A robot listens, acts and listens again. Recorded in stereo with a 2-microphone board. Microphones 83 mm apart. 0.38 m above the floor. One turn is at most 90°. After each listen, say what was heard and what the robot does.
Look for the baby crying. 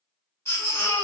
The baby crying: about 35° left or 145° left. Turn 35° left.
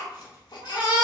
So it is at 110° left. Turn 90° left.
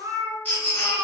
The baby crying is now 20° left. Turn 20° left.
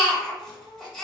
Facing the baby crying, 1 to 2 m away.